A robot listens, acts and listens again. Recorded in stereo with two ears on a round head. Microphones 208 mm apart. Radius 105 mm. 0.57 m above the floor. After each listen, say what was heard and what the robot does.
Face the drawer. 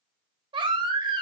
Keep listening.
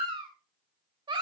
Keep listening.
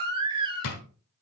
The drawer: about 75° left or 105° left. Turn 75° left.
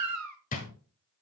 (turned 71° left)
So it is at 35° left. Turn 35° left.
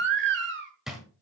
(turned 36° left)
Found it: a drawer, straight ahead.